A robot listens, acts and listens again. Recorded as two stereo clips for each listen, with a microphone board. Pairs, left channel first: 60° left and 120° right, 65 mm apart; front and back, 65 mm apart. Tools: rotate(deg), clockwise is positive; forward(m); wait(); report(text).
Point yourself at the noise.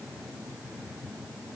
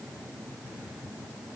wait()
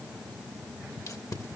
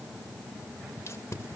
rotate(-40)
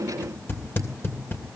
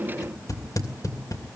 rotate(-10)
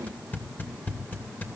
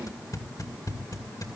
report("Found it: tape being pulled, straight ahead, 2 to 4 m away.")